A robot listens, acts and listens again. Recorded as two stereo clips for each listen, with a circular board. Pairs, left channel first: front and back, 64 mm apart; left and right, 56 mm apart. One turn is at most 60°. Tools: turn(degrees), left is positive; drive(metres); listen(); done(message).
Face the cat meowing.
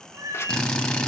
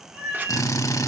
turn(degrees=-60)
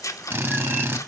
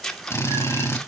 turn(degrees=-60)
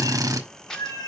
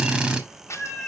done("Facing the cat meowing, 2 to 4 m away.")